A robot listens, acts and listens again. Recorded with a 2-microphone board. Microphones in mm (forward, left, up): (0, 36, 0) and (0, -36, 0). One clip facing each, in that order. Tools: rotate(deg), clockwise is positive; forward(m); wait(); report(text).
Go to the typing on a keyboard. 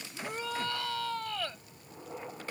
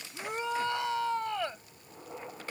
wait()
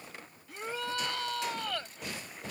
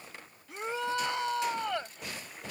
wait()
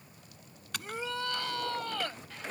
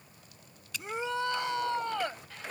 rotate(-65)
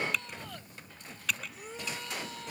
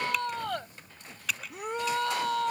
forward(1.0)
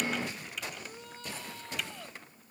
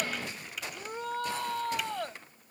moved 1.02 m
wait()
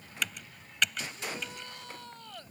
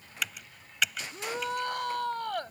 forward(1.0)
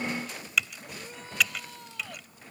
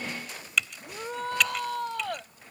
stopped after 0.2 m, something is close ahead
report("Arrived at the typing on a keyboard, straight ahead.")